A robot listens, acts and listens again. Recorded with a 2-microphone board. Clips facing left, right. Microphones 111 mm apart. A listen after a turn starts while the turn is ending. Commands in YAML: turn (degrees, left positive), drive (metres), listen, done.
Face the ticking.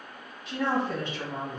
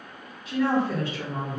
listen: true
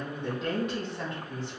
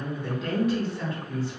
listen: true
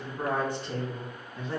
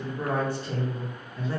done: "I can't make out ticking, only a woman speaking."